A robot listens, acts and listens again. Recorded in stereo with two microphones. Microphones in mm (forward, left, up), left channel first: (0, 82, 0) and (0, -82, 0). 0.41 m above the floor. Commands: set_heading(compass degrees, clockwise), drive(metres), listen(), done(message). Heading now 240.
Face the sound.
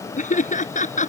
set_heading(190)
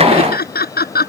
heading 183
set_heading(108)
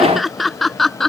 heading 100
done("Facing the laughter.")